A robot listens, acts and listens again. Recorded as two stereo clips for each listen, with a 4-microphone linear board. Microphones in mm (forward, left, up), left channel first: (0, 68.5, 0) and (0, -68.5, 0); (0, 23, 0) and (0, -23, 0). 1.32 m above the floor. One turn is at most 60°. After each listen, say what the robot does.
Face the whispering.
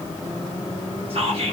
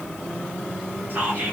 Turn 45° right.
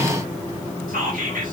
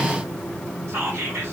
Turn 60° right.
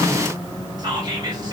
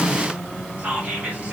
Turn 30° right.
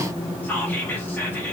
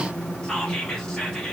Turn 15° left.
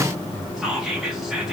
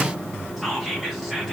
Facing the whispering.